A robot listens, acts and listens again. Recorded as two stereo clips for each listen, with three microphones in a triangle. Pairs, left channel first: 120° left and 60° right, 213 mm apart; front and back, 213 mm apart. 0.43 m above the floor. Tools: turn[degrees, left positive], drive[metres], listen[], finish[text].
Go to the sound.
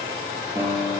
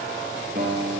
Thought: The guitar: 135° right.
Action: turn[-135]
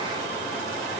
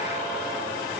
Action: listen[]
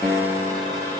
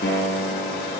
Thought: The guitar is now 30° left.
Action: turn[30]
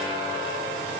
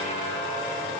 Action: listen[]
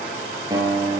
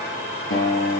Thought: The guitar is now 15° left.
Action: turn[15]
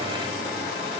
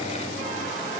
Action: listen[]
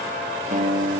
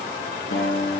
Action: drive[1.0]
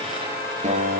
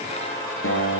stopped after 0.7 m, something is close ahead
Action: finish[Blocked. The guitar is further on, straight ahead.]